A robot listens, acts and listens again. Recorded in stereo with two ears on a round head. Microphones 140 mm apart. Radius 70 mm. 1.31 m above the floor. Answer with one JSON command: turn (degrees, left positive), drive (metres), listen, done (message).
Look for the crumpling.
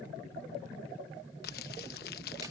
{"turn": 60}
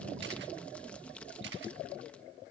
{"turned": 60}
{"turn": 10}
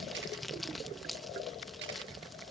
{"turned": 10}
{"done": "Facing the crumpling."}